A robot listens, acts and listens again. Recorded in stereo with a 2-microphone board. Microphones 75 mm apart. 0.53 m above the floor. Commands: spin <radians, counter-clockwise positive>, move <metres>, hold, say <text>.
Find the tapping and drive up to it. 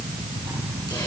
hold
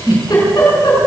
hold
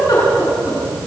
say I can't make out tapping to turn to.